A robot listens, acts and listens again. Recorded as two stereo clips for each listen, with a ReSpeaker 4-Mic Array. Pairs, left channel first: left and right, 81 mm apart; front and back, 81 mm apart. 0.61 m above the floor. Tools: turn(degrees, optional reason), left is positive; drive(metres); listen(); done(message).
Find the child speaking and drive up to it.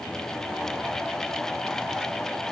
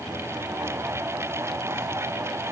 listen()
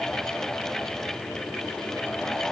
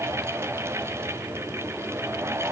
listen()
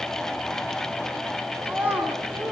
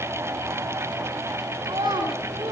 turn(degrees=-160, reason="The child speaking: 160° right.")
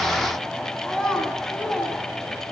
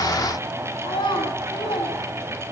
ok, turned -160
drive(metres=1.0)
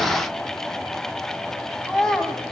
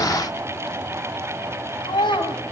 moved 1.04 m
drive(metres=1.0)
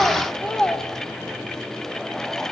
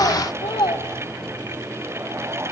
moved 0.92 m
turn(degrees=10, reason="The child speaking is now 10° left.")
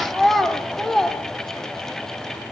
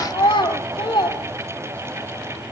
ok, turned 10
drive(metres=1.0)
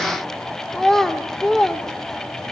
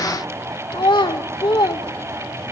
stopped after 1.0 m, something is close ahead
done("Arrived at the child speaking, straight ahead.")